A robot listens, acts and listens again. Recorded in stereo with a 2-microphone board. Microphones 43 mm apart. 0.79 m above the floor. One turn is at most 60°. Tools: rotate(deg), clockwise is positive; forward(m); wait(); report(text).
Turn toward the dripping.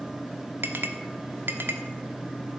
wait()
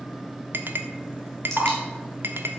rotate(-30)
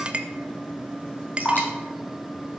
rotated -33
rotate(-60)
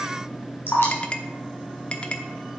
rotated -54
rotate(-60)
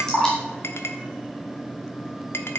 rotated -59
rotate(-20)
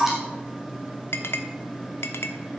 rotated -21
report("Found it: dripping, straight ahead.")